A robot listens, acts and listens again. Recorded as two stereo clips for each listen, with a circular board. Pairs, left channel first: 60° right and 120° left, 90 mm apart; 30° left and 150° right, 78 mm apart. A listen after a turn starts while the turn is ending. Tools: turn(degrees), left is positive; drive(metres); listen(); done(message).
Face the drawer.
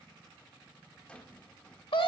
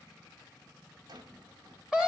turn(degrees=-140)
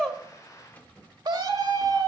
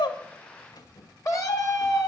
turn(degrees=10)
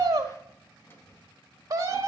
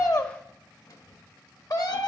done("Facing the drawer.")